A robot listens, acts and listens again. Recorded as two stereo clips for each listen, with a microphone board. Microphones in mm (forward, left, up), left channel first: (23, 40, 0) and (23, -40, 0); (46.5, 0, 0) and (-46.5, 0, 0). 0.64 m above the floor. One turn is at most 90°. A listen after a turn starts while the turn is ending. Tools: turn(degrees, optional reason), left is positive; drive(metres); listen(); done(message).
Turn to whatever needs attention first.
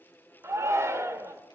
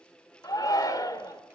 turn(degrees=-40, reason="The shout: 40° right.")
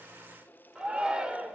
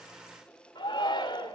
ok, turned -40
turn(degrees=-15, reason="The shout is now 15° right.")
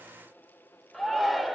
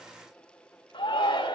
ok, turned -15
done("Found it: a shout, straight ahead, 2 to 4 m away.")